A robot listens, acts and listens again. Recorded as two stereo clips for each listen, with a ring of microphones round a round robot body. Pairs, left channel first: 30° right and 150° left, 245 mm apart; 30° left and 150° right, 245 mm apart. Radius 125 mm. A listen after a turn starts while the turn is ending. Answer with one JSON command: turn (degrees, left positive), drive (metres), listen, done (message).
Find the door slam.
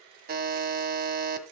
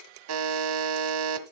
{"listen": true}
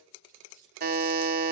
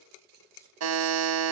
{"listen": true}
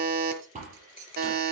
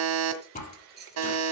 {"turn": 85}
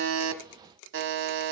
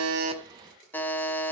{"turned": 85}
{"done": "I heard a door slam from this way, but can't make it out now."}